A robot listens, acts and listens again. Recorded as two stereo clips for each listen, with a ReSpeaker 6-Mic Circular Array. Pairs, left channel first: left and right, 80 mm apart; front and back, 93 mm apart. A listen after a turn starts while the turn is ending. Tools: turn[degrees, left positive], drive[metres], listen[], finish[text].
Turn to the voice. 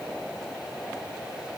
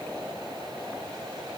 Action: listen[]
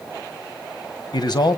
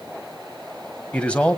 Thought: The man speaking: 75° left.
Action: turn[75]
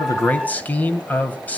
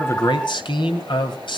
Thought: The man speaking is now 20° left.
Action: turn[20]
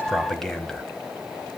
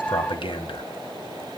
Action: finish[Found it: a man speaking, straight ahead.]